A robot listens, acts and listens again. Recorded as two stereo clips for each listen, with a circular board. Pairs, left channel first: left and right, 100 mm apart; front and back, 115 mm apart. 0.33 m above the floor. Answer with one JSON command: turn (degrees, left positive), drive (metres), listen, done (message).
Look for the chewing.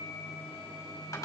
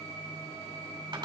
{"listen": true}
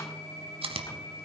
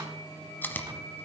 {"turn": -75}
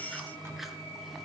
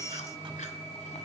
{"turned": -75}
{"listen": true}
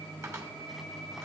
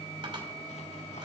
{"listen": true}
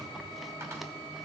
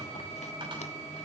{"done": "I heard chewing from this way, but can't make it out now."}